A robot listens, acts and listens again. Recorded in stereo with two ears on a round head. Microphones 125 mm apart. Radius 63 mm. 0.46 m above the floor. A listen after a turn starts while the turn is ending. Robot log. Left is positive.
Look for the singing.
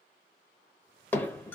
cmd idle
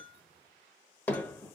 cmd idle
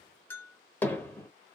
end: I can't make out singing to turn to.